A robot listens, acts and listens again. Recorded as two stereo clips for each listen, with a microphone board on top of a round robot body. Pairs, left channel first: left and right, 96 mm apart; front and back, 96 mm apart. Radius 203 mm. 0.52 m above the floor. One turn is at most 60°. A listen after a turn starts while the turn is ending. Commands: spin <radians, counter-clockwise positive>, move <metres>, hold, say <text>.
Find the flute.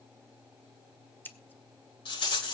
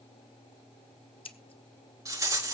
hold
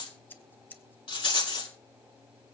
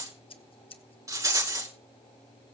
hold
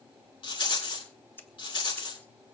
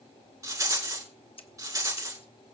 say I can't make out a flute to turn to.